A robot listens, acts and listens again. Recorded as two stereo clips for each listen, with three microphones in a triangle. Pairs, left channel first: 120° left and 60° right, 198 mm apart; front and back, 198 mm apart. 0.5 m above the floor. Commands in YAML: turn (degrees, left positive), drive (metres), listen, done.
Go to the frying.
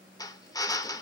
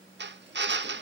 listen: true
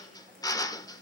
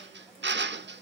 listen: true
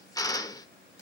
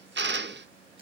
done: "I can't make out frying, only a drill."